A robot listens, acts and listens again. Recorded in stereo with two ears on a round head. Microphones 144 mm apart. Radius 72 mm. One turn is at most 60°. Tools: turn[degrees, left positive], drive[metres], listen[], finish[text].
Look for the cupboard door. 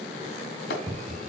Action: turn[-30]
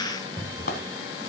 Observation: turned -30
Thought: So it is at 10° left.
Action: turn[10]
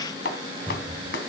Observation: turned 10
Action: finish[Found it: a cupboard door, straight ahead.]